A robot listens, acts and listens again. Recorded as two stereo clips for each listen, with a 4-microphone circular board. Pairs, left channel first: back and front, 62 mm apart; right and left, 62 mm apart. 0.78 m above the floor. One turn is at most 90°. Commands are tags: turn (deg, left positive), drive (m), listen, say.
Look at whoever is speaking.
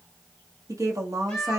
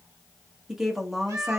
<turn deg="10"/>
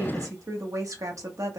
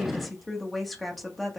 <say>Facing the woman speaking.</say>